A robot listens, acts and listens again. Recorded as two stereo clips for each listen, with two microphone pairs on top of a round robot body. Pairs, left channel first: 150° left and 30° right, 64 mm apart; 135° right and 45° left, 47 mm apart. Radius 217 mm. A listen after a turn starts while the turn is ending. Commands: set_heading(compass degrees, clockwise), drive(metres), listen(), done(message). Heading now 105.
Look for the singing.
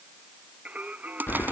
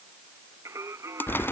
set_heading(70)
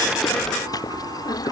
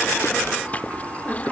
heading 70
listen()
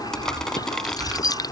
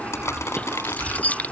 listen()
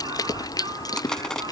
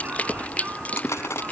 done("Facing where the singing came from. I can't hear it now.")